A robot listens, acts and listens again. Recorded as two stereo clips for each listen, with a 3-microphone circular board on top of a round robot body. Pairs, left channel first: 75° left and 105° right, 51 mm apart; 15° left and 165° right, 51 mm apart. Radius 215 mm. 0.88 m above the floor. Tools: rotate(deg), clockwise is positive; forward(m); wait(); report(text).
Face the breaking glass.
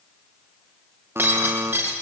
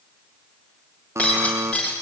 rotate(55)
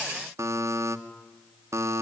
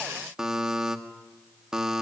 report("I heard breaking glass from this way, but can't make it out now.")